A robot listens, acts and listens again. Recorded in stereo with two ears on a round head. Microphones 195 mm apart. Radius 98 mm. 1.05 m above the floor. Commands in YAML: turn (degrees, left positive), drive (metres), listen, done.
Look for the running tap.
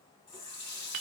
turn: 15
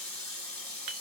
done: "Found it: a running tap, straight ahead."